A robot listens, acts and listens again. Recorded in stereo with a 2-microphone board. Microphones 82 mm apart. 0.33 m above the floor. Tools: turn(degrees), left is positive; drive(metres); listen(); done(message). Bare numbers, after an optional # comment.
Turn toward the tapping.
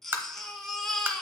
# The tapping: about 30° right or 150° right.
turn(-30)
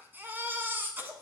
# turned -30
listen()
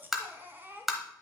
done("Facing the tapping.")